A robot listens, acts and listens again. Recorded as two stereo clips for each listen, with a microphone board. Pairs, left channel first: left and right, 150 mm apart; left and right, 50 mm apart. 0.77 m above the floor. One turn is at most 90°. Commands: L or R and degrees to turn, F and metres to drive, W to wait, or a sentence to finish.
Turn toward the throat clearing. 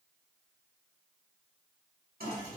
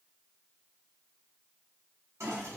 W
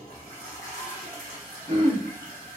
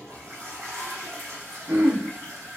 R50
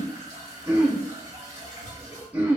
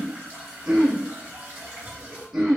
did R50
R10
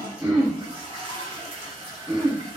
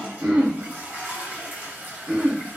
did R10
Found it: throat clearing, straight ahead.